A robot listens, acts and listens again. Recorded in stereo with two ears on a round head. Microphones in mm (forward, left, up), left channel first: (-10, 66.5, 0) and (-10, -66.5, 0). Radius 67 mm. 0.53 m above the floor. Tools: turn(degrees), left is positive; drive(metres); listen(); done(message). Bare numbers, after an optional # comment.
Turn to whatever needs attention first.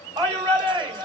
# The shout: about 25° right or 155° right.
turn(-25)
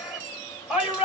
done("Facing the shout, 1 to 2 m away.")